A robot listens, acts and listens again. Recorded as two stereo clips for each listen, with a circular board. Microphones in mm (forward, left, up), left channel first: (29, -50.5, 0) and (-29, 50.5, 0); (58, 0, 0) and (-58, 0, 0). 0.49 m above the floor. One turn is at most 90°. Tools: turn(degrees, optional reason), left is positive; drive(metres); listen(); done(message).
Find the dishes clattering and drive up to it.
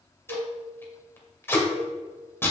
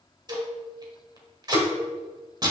turn(degrees=90, reason="The dishes clattering: 150° left.")
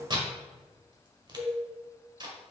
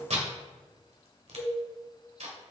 turn(degrees=85, reason="The dishes clattering is now 85° left.")
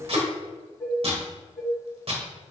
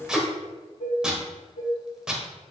turn(degrees=15, reason="The dishes clattering is now 15° left.")
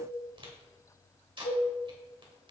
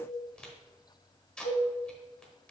drive(metres=1.0)
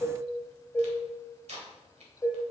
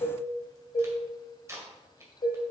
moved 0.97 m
drive(metres=1.0)
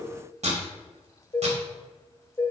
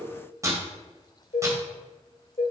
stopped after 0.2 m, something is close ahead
done("I am next to the dishes clattering.")